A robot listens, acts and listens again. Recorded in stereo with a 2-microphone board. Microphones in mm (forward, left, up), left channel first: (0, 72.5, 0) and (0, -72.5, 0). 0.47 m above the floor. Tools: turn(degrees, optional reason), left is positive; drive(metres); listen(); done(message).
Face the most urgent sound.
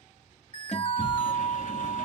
turn(degrees=-65, reason="The alarm: about 65° right or 115° right.")
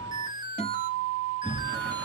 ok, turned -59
turn(degrees=-35, reason="So it is at 35° right.")
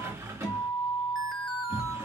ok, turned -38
listen()
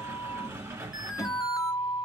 done("Found it: an alarm, straight ahead, under 1 m away.")